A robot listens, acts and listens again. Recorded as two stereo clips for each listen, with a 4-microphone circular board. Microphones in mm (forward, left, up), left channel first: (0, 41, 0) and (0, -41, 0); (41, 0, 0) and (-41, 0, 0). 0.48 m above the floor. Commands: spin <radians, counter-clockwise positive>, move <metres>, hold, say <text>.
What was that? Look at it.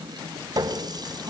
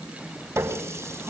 spin -2.18
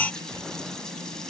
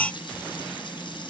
hold
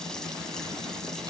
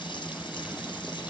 hold
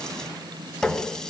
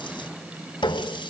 say Facing the running tap, 2 to 4 m away.